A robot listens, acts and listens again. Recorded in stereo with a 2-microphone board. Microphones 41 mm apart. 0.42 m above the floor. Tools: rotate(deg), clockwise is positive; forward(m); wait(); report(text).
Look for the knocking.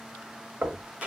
rotate(55)
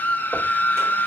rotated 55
wait()
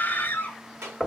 rotate(15)
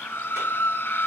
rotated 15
wait()
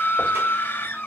wait()
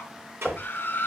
report("Facing the knocking.")